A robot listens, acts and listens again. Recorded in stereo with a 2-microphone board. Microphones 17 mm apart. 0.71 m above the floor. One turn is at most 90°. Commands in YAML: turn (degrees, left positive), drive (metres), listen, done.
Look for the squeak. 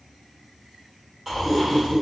turn: 55
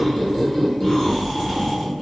turn: 55
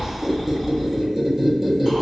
turn: -10
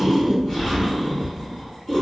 done: "Facing the squeak, under 1 m away."